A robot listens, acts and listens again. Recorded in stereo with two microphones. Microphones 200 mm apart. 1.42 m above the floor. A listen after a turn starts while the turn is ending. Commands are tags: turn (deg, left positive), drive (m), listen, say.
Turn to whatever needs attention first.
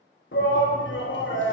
<turn deg="70"/>
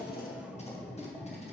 <say>Found it: a shout, straight ahead, 1 to 2 m away.</say>